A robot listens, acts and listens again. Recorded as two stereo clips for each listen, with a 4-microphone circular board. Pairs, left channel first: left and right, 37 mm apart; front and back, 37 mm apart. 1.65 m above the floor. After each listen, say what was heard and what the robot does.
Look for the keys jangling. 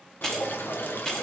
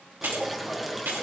The keys jangling: 160° left. Turn 160° left.
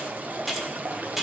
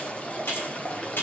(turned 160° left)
The keys jangling is now 10° right. Turn 10° right.
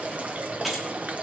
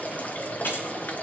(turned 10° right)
The keys jangling is now 10° right. Turn 10° right.
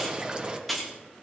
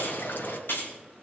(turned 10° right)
Facing the keys jangling, 2 to 4 m away.